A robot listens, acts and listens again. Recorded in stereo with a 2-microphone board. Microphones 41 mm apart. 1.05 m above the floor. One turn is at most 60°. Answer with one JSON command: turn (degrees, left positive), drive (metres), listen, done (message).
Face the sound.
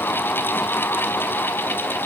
{"listen": true}
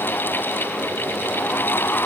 {"listen": true}
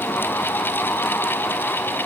{"done": "I can't make out anything to turn to."}